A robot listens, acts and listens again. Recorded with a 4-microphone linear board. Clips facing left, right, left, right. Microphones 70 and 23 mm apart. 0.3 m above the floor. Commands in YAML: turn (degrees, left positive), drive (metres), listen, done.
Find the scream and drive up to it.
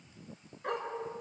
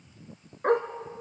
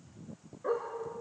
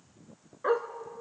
listen: true
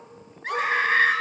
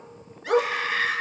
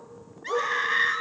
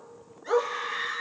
turn: 45
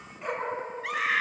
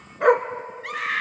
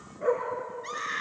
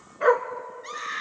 drive: 1.0
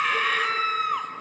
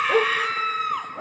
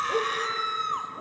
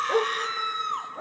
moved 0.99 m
drive: 1.0
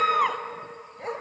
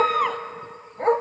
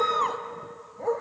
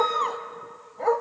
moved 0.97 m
drive: 1.0
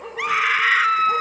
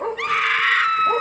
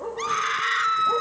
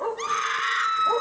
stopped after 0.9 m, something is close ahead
turn: 15
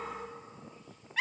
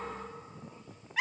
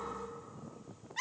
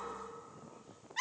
done: "Arrived at the scream, straight ahead."